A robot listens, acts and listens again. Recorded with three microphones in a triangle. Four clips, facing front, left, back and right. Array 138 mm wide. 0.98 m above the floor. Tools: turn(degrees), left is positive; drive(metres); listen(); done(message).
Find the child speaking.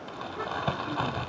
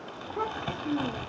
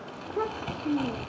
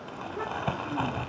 turn(degrees=140)
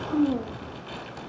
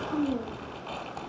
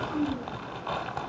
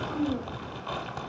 turn(degrees=15)
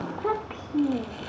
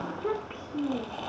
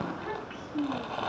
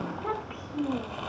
done("Facing the child speaking, 2 to 4 m away.")